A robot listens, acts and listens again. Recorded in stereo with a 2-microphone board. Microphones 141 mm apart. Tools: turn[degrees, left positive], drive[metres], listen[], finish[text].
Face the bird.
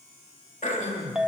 Action: listen[]
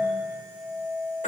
Action: listen[]
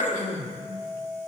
Action: finish[I can't make out a bird to turn to.]